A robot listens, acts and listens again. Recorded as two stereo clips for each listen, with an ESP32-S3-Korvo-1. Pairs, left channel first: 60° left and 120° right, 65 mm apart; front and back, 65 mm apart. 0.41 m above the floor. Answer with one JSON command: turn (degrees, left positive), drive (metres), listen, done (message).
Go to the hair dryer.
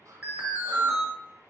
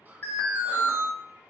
{"listen": true}
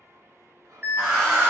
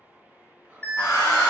{"turn": -20}
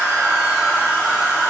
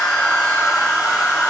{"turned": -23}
{"drive": 1.0}
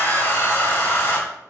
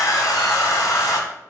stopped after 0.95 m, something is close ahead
{"done": "I am next to the hair dryer."}